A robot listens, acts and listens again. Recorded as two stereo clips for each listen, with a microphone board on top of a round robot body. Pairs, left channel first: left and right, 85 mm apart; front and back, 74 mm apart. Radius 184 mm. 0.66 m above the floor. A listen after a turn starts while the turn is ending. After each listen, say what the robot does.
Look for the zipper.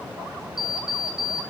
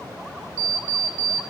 Keep listening.
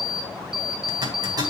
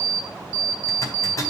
Turn 50° right.
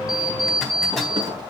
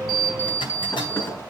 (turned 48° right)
Keep listening.
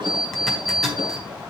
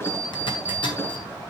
Found it: a zipper, straight ahead.